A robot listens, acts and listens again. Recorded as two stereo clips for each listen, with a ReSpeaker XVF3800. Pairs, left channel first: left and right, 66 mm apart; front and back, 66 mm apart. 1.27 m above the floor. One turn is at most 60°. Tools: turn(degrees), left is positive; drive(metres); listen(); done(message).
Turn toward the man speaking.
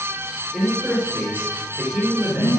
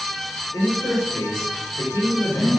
turn(degrees=-25)
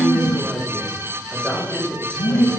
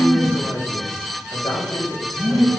done("Found it: a man speaking, straight ahead, over 4 m away.")